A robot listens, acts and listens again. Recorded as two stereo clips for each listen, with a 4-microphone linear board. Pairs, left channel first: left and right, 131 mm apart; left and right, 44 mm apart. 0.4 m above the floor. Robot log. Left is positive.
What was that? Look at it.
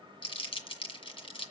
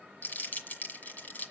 note: The crumpling: about 45° left or 135° left.
cmd yaw +45
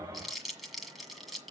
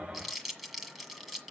end: Found it: crumpling, straight ahead, 1 to 2 m away.